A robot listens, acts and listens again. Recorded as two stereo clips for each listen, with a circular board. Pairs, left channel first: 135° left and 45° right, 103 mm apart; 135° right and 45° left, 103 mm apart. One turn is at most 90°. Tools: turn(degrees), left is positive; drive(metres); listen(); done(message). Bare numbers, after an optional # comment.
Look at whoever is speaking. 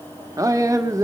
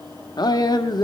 # The man speaking: 95° right.
turn(-90)
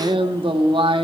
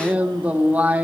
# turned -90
# The man speaking is now 30° right.
turn(-30)
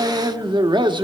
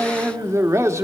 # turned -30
# The man speaking is now 15° right.
turn(-15)
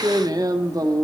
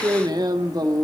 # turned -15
done("Found it: a man speaking, straight ahead.")